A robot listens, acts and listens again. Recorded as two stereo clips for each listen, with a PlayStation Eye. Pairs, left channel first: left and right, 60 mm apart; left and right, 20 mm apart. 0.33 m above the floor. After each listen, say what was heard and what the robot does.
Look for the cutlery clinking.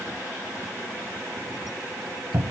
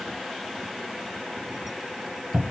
Keep listening.
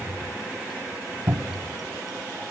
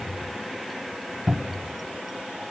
Keep listening.
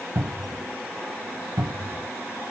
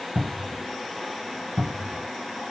I can't make out cutlery clinking to turn to.